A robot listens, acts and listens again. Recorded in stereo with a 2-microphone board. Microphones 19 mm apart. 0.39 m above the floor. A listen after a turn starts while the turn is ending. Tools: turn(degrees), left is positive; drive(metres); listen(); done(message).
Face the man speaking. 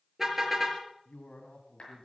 turn(degrees=60)
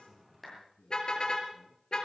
turn(degrees=55)
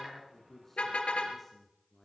turn(degrees=15)
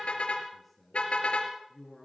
turn(degrees=10)
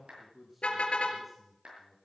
done("Facing the man speaking.")